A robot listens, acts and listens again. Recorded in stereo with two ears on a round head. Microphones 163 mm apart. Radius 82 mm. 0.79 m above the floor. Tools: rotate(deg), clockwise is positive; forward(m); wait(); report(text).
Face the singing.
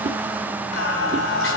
rotate(-75)
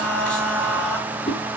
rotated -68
report("Found it: singing, straight ahead.")